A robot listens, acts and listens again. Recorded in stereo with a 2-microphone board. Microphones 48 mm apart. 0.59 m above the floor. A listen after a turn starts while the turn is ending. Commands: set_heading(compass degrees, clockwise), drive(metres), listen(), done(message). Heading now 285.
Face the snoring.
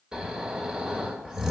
set_heading(315)
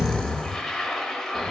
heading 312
set_heading(297)
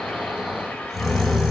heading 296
done("Facing the snoring, 1 to 2 m away.")